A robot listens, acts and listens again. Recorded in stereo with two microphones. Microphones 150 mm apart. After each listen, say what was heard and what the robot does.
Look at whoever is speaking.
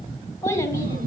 The child speaking: about 20° left or 160° left. Turn 20° left.
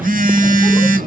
Keep listening.
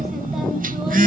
Keep listening.
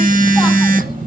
I heard a child speaking, but can't make it out now. It was about straight ahead or 140° left.